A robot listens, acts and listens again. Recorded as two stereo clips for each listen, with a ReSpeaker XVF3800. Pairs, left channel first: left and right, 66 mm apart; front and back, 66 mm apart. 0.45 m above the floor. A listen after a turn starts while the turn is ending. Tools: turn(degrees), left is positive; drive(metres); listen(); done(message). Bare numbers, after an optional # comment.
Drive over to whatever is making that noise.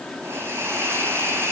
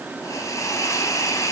# The hiss: 35° right.
turn(-35)
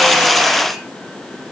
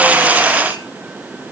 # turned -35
listen()
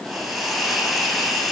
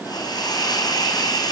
drive(1.0)
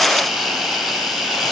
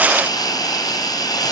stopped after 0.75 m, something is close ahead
done("Something is in my way. I am facing the hiss but have not reached it.")